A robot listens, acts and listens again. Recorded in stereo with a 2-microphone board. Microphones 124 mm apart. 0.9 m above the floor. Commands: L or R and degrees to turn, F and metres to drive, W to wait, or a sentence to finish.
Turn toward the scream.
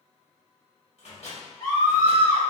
L30
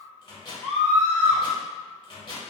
Found it: a scream, straight ahead, 1 to 2 m away.